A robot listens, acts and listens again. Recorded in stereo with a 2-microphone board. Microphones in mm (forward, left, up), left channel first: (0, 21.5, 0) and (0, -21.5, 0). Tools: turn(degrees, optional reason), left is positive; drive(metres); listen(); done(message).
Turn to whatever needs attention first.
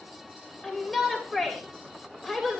turn(degrees=30)
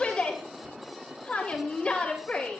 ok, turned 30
turn(degrees=150, reason="So it is at 150° left.")
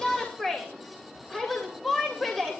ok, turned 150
turn(degrees=10, reason="The shout is now 10° left.")
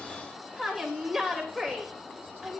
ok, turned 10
done("Facing the shout.")